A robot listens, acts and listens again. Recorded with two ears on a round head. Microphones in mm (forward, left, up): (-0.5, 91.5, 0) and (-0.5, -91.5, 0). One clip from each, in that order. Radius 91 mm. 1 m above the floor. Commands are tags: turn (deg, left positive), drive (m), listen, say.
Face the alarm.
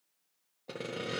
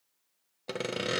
<listen/>
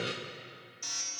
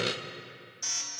<turn deg="-30"/>
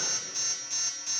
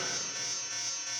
<turn deg="15"/>
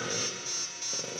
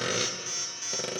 <say>Facing the alarm, over 4 m away.</say>